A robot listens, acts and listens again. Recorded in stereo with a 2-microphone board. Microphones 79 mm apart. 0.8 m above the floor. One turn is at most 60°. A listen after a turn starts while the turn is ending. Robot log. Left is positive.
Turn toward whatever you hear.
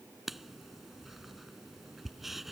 cmd yaw -30
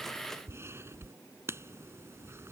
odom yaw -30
note: So it is at 145° right.
cmd yaw -60
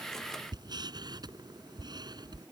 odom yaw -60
note: The writing is now 120° right.
cmd yaw -60
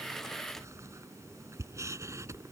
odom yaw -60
note: The writing is now 40° right.
cmd yaw -40
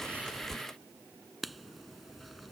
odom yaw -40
end: Found it: writing, straight ahead.